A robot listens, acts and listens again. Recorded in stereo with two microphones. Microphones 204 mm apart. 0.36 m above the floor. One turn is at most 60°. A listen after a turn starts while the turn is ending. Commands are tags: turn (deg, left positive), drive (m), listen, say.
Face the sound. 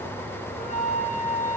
<turn deg="40"/>
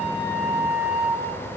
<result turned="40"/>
<say>Facing the flute.</say>